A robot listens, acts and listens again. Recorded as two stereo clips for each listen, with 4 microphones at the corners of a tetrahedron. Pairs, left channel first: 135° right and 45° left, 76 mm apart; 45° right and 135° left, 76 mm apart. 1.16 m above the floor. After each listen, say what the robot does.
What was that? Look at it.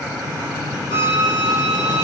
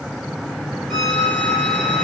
Turn 135° right.
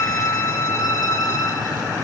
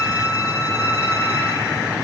Turn 10° right.
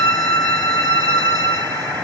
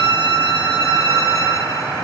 Found it: a violin, straight ahead.